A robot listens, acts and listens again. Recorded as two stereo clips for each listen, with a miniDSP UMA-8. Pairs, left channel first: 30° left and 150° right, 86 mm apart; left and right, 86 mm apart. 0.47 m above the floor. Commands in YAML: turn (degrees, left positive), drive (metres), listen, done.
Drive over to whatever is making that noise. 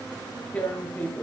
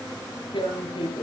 turn: 105
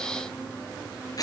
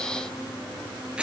turn: -15
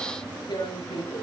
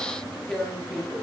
drive: 1.0
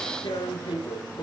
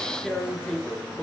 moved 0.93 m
drive: 1.0
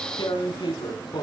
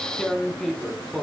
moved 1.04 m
drive: 1.0
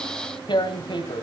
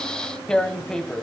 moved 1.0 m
drive: 1.0
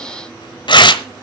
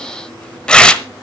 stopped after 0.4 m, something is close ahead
turn: 10
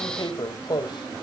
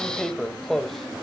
done: "Arrived at the tearing paper, straight ahead."